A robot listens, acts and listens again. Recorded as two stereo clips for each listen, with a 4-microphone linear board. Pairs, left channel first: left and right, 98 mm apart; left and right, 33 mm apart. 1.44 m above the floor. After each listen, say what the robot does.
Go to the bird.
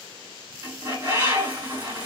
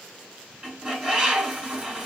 Turn 30° right.
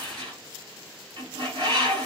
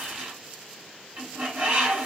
Turn 120° right.
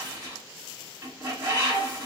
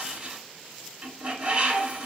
Turn 35° right.
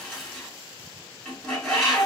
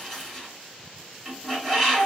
Drive 1.0 m forward.
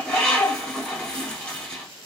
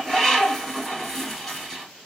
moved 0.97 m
Turn 10° left.
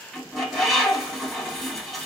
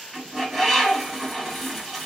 Drive 1.0 m forward.
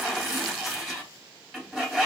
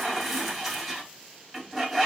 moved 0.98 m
Drive 1.0 m forward.
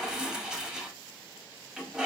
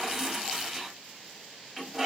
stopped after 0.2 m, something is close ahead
Turn 10° right.
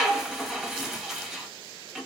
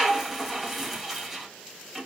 Arrived at the bird, straight ahead.